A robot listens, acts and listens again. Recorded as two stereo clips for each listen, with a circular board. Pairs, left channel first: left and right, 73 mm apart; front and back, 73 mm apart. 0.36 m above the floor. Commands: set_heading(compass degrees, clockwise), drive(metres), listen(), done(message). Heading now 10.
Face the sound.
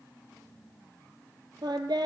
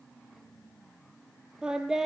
set_heading(110)
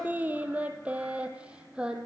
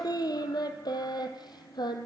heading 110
set_heading(120)
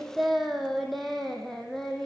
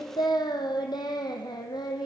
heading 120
done("Found it: singing, straight ahead.")